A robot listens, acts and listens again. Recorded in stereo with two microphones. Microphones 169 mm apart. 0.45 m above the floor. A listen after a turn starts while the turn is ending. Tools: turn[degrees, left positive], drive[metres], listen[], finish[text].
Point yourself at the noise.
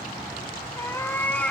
Action: turn[30]
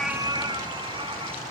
Thought: So it is at 30° right.
Action: turn[-30]
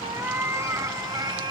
Thought: The cat meowing is now 30° right.
Action: turn[-30]
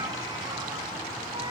Action: listen[]
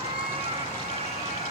Thought: The cat meowing is now 40° right.
Action: turn[-40]
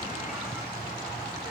Action: listen[]
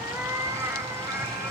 Thought: The cat meowing is now 15° right.
Action: turn[-15]
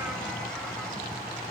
Action: listen[]
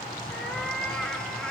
Action: finish[Found it: a cat meowing, straight ahead, 2 to 4 m away.]